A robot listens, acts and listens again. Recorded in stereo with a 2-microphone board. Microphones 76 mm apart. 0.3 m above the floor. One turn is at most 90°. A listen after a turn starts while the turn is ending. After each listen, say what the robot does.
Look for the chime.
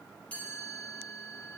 Turn 20° left.
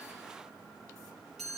Found it: a chime, straight ahead.